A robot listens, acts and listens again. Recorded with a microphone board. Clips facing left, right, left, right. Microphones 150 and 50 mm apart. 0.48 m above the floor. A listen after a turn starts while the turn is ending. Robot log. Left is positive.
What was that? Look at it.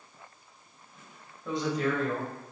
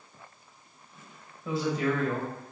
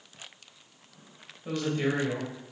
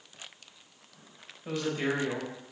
cmd yaw -30
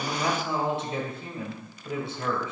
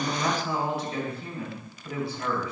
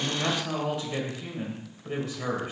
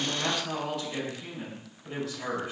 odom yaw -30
note: So it is at 30° left.
cmd yaw +30
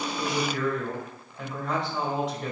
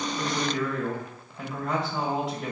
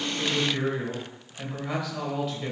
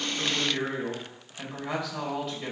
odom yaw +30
end: Found it: a woman speaking, straight ahead, 2 to 4 m away.